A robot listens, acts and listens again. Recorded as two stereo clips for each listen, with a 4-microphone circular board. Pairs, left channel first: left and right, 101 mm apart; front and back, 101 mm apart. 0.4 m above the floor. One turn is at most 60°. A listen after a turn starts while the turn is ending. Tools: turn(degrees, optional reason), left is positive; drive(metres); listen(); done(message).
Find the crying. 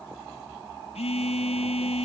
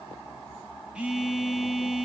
listen()
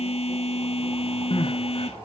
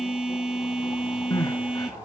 turn(degrees=55, reason="The crying: 55° left.")
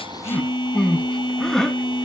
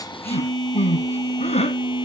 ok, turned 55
done("Facing the crying.")